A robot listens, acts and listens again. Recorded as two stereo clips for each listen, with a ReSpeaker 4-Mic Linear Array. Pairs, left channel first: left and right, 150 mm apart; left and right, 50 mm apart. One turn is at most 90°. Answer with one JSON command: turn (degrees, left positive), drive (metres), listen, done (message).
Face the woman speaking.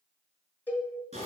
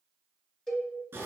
{"listen": true}
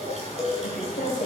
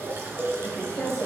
{"turn": 65}
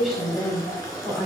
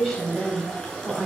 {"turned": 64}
{"done": "Found it: a woman speaking, straight ahead, 2 to 4 m away."}